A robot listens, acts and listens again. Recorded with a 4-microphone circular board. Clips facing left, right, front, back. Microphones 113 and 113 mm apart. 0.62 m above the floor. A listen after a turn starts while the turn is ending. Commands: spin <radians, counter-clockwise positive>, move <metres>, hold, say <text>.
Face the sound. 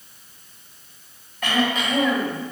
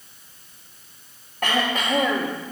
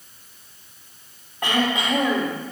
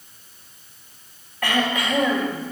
spin -1.13
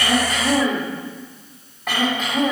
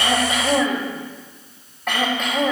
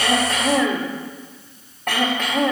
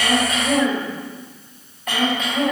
say Facing the throat clearing, 2 to 4 m away.